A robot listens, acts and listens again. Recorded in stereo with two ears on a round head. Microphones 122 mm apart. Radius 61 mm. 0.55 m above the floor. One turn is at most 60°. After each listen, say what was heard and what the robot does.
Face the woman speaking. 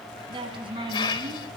The woman speaking: about 40° right or 140° right. Turn 40° right.
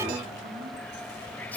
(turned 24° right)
Keep listening.
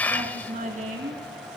So it is at 120° right. Turn 60° right.
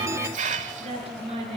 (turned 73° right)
The woman speaking is now 45° right. Turn 45° right.
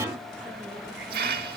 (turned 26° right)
Nothing new. It was at 20° right. Turn 20° right.
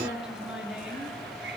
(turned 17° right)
Facing the woman speaking, over 4 m away.